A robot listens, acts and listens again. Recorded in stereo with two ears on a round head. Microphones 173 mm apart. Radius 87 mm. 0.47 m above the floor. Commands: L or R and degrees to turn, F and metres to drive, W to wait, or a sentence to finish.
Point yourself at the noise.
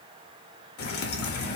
L55
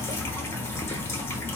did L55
L15
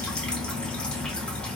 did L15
Found it: dripping, straight ahead, under 1 m away.